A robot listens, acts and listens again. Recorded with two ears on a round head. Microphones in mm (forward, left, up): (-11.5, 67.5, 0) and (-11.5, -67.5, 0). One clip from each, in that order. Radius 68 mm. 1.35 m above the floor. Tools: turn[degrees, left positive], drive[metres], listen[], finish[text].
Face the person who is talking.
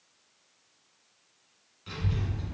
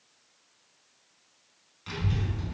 Thought: The child speaking: about 30° right or 150° right.
Action: turn[-30]
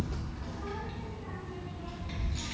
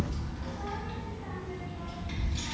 Action: finish[Found it: a child speaking, straight ahead.]